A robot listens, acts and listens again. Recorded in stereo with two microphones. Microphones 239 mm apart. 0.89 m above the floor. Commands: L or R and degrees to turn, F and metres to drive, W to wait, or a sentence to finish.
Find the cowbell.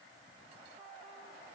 W
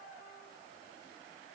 W
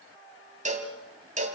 R30
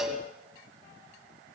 Found it: a cowbell, straight ahead, 2 to 4 m away.